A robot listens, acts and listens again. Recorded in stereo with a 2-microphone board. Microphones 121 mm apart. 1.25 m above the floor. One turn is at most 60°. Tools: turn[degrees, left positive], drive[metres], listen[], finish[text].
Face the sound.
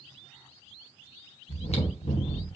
Thought: The chewing: about 60° left or 120° left.
Action: turn[60]
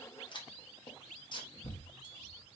Thought: So it is at 45° left.
Action: turn[45]
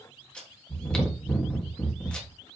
Thought: The chewing is now 10° left.
Action: turn[10]
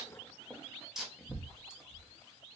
Action: finish[Facing the chewing, 1 to 2 m away.]